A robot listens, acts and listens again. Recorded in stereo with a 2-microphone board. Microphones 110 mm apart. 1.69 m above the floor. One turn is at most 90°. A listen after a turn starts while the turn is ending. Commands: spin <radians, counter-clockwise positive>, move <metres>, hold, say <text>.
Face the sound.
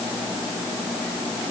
hold
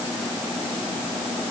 hold
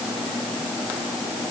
say I can't make out anything to turn to.